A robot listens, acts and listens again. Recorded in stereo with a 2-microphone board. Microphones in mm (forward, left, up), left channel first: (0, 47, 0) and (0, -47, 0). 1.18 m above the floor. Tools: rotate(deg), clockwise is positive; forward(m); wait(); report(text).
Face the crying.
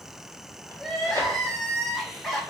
rotate(-30)
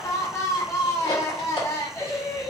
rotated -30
rotate(-150)
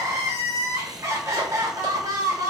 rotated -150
rotate(30)
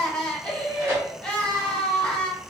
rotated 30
rotate(-10)
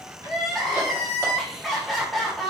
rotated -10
report("Found it: crying, straight ahead.")